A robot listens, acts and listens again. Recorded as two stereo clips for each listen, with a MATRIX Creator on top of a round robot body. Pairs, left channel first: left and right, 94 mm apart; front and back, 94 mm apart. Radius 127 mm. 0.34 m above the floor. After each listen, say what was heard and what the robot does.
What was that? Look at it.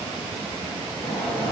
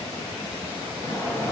The sliding door: 60° left. Turn 60° left.
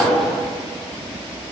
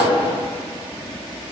Found it: a sliding door, straight ahead.